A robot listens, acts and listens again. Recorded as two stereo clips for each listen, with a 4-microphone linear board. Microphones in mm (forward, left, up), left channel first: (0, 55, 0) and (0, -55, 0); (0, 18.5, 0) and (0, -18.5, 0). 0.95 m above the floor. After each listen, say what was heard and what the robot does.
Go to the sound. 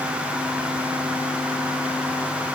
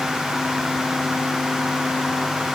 Keep listening.
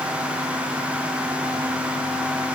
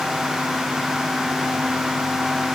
Keep listening.
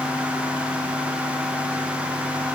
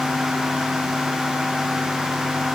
I can't make out anything.